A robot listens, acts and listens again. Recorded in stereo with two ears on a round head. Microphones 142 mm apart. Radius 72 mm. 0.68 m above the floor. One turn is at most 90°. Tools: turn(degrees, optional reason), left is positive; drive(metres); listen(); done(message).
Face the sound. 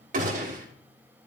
turn(degrees=-50, reason="The gunshot: about 50° right or 130° right.")
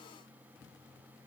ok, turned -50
listen()
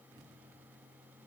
done("I heard a gunshot, but can't make it out now. It was about straight ahead or 80° right.")